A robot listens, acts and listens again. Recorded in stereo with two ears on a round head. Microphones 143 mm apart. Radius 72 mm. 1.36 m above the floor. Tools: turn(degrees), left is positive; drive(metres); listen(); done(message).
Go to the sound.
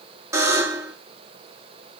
turn(degrees=-20)
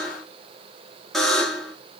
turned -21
drive(metres=1.0)
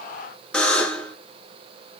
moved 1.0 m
drive(metres=1.0)
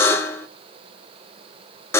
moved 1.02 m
turn(degrees=15)
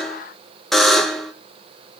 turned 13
drive(metres=1.0)
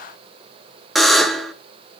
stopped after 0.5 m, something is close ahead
done("I am next to the buzzer.")